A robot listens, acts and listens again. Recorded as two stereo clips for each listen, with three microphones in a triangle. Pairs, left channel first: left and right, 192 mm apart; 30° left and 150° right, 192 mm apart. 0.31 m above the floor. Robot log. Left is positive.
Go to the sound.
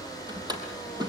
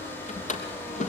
note: The drawer: 20° right.
cmd yaw -20
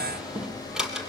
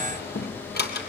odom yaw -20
cmd fwd 1.0
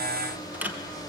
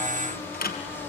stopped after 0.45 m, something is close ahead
note: The drawer is now 10° right.
cmd yaw -10
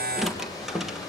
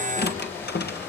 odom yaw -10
end: Something is in my way. I am facing the drawer but have not reached it.